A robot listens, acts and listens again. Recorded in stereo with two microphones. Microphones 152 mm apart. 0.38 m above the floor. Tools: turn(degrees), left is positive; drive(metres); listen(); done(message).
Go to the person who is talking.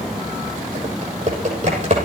listen()
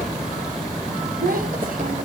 turn(degrees=-70)
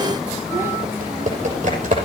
listen()
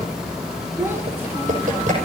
turn(degrees=-15)
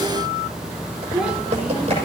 drive(metres=1.0)
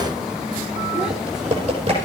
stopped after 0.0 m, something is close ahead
listen()
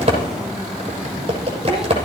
listen()
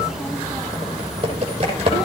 done("Facing where the child speaking came from. I can't hear it now. I did not reach it.")